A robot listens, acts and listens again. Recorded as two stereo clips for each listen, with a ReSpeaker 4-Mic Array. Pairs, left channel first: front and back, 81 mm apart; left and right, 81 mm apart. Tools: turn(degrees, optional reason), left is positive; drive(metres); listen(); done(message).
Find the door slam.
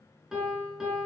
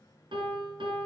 listen()
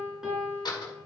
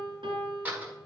turn(degrees=-20, reason="The door slam: 20° right.")
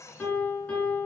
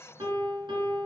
done("Facing where the door slam came from. I can't hear it now.")